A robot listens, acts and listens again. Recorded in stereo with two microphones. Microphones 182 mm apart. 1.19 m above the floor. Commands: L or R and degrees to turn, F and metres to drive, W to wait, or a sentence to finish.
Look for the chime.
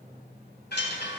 L65
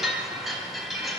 Facing the chime.